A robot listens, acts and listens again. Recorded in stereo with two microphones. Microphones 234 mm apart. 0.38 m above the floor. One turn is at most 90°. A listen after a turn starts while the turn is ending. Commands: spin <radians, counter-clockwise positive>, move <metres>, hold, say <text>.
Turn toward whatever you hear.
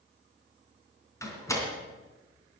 spin 0.52
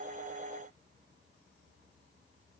hold
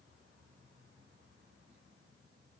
say I heard a door slam, but can't make it out now. It was about 15° right or 135° left.